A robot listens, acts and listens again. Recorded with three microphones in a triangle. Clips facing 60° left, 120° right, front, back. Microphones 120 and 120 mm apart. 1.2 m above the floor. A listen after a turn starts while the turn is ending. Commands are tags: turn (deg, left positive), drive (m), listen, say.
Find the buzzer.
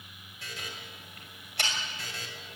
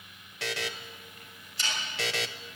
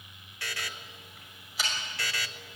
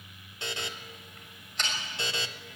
<turn deg="-115"/>
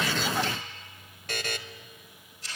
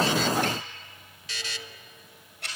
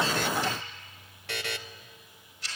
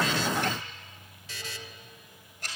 <turn deg="25"/>
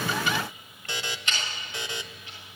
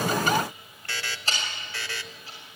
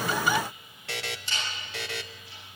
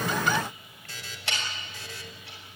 <turn deg="-10"/>
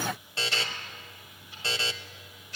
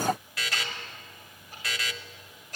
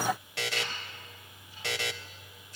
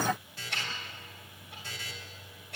<say>Found it: a buzzer, straight ahead, 1 to 2 m away.</say>